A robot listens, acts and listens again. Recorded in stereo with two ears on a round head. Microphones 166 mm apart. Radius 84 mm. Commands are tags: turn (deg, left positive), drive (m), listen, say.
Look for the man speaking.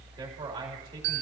<turn deg="-20"/>
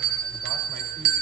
<listen/>
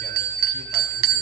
<listen/>
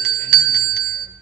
<say>I heard a man speaking, but can't make it out now. It was about straight ahead or 140° right.</say>